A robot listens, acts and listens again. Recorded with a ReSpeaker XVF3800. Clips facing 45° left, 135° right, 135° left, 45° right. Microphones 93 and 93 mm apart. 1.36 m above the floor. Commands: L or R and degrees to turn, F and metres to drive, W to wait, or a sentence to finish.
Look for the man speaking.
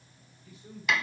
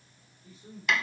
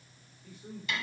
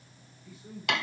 L170
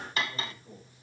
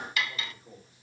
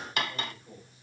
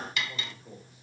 R55
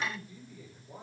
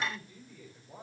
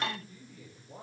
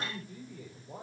R25
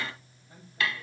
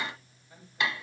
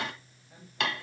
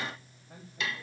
Found it: a man speaking, straight ahead.